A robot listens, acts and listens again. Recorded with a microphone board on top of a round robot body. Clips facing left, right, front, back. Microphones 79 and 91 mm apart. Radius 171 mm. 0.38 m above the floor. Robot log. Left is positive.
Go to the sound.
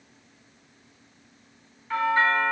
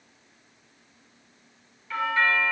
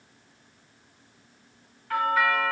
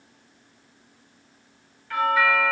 note: The doorbell: 45° left.
cmd yaw +45
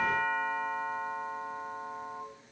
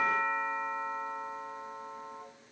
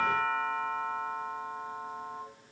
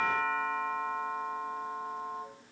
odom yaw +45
note: The doorbell is now 15° left.
cmd yaw +15
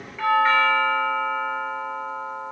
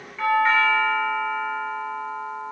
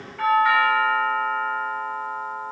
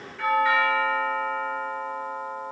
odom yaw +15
cmd fwd 1.0
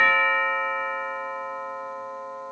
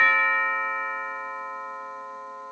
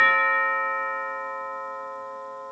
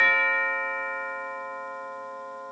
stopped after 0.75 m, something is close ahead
end: Arrived at the doorbell, straight ahead.